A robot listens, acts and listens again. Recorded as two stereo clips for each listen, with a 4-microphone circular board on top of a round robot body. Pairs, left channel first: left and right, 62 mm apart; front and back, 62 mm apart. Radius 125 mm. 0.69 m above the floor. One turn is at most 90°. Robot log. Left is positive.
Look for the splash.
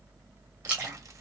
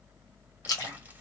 note: The splash: 20° right.
cmd yaw -20
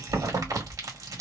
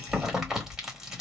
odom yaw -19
end: Facing where the splash came from. I can't hear it now.